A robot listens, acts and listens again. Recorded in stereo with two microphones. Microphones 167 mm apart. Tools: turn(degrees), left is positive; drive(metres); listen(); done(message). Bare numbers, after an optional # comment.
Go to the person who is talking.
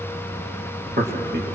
# The man speaking: about 70° right or 110° right.
turn(-70)
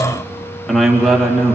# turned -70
drive(1.0)
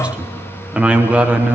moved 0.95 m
drive(1.0)
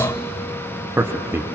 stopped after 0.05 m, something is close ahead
# The man speaking is now 15° right.
turn(-15)
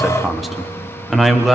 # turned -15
done("I am next to the man speaking.")